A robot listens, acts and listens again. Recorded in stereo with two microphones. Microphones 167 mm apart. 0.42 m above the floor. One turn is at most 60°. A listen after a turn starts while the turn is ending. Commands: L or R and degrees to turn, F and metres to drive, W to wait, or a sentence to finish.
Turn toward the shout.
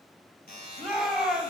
L30
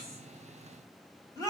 L60
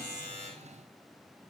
L60
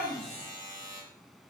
L30
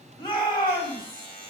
L30
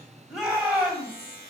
R10
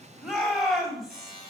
Found it: a shout, straight ahead, 2 to 4 m away.